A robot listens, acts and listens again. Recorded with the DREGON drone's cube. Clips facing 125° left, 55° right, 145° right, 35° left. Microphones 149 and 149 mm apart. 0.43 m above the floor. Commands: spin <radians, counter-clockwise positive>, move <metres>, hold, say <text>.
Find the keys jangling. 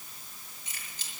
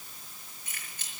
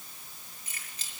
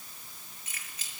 spin -1.48
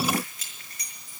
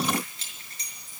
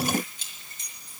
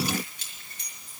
spin 0.17
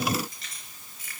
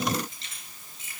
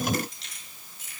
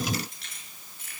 spin 0.17
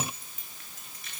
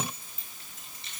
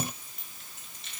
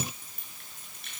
spin 0.17
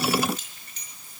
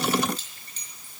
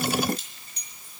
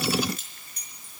say Facing the keys jangling.